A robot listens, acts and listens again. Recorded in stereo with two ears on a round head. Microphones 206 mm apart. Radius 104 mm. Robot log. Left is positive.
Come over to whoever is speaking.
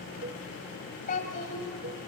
note: The child speaking: about 35° left or 145° left.
cmd yaw +35
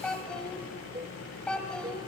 cmd fwd 1.0
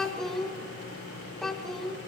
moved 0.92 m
cmd fwd 1.0
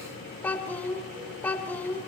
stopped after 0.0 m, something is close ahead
note: The child speaking is now 10° left.
cmd yaw +10
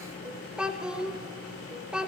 end: Arrived at the child speaking, straight ahead.